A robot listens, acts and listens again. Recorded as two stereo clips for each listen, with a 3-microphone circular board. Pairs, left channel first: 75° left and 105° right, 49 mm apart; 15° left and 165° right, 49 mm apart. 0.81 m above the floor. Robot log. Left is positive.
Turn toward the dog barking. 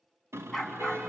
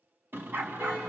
note: The dog barking: 160° left.
cmd yaw +160
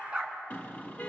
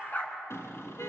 note: The dog barking is now 35° right.
cmd yaw -35
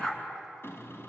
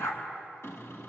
end: Facing the dog barking.